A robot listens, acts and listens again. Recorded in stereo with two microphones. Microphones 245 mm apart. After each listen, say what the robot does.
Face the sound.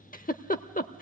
Turn 35° left.
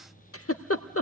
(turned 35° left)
Turn 110° left.
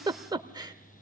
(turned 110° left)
Turn 20° right.
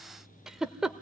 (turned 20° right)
Found it: a giggle, straight ahead, under 1 m away.